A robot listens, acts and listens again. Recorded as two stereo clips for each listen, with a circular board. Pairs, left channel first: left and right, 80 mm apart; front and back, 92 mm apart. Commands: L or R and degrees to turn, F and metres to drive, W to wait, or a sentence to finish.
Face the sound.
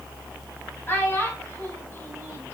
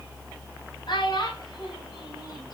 L30
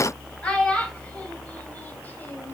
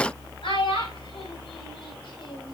L15
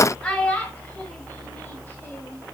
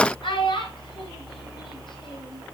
L15
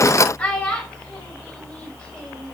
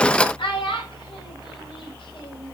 L15
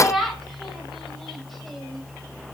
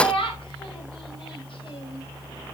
Found it: a child speaking, straight ahead.